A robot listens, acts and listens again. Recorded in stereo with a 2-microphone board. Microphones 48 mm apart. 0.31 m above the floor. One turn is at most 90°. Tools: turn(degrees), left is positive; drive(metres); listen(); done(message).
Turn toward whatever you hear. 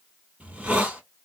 turn(degrees=-30)
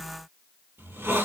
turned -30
turn(degrees=-90)
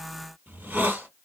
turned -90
turn(degrees=-45)
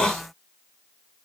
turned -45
turn(degrees=15)
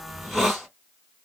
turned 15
done("Facing the hiss.")